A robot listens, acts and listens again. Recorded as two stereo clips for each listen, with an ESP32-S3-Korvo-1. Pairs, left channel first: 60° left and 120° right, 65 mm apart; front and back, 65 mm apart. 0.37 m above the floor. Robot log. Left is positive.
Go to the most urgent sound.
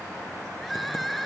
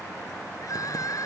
note: The crying: 30° right.
cmd yaw -30
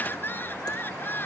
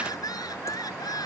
cmd fwd 1.0
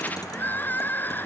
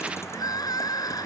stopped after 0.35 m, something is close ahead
end: Something is in my way. I am facing the crying but have not reached it.